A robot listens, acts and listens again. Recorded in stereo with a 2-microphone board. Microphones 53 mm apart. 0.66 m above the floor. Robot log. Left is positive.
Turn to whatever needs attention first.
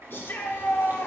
note: The shout: about 45° left or 135° left.
cmd yaw +45
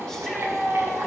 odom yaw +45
note: So it is at 10° left.
cmd yaw +10
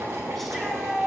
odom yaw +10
end: Facing the shout, 1 to 2 m away.